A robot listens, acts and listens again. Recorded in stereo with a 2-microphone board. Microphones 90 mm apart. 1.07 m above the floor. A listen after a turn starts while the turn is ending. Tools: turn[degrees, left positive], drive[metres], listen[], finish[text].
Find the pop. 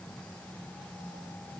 Action: listen[]
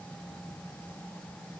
Action: listen[]
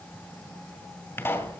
Thought: The pop: about 25° left or 155° left.
Action: turn[25]
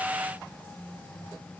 Action: listen[]
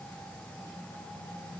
Action: finish[I heard a pop, but can't make it out now. It was about straight ahead or 130° left.]